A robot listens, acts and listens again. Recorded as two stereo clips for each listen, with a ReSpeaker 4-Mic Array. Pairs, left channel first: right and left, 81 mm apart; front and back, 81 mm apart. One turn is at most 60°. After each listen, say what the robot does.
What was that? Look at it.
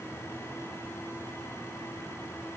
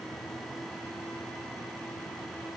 Keep listening.
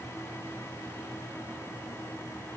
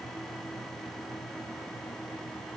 Keep listening.
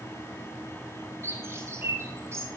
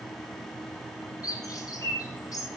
Turn 40° left.
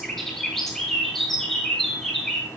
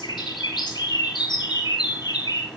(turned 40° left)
Found it: a bird, straight ahead.